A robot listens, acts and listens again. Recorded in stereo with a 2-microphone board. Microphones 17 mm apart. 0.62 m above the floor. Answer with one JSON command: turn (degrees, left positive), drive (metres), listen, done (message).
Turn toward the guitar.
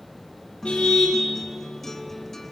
{"turn": 30}
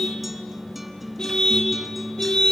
{"turn": -20}
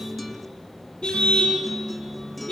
{"done": "Found it: a guitar, straight ahead."}